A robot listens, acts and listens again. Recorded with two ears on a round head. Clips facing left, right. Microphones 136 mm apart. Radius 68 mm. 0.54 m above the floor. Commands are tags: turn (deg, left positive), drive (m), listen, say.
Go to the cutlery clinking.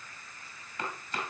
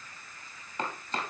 <listen/>
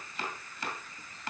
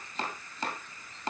<listen/>
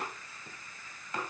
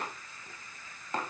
<say>I can't make out cutlery clinking, only chopping.</say>